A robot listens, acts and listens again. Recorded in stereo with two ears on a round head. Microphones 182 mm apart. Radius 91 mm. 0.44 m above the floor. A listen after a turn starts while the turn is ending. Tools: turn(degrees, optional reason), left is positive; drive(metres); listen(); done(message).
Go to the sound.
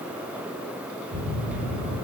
turn(degrees=-90)
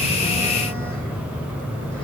drive(metres=1.0)
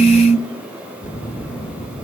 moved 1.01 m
turn(degrees=15, reason="The phone buzzing is now 15° left.")
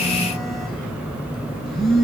drive(metres=1.0)
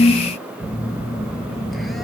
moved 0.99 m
drive(metres=1.0)
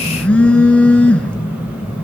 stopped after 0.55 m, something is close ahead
done("Arrived at the phone buzzing, straight ahead.")